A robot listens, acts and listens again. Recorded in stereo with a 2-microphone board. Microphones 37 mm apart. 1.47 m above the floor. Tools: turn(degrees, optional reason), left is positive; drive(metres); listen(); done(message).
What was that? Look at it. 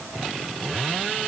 listen()
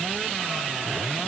listen()
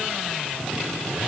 done("I can't make out anything.")